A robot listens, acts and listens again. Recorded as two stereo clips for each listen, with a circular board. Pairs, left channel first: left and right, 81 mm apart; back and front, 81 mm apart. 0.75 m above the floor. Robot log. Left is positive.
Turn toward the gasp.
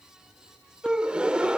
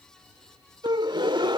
note: The gasp: 10° right.
cmd yaw -10
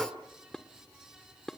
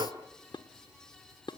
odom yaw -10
end: Found it: a gasp, straight ahead.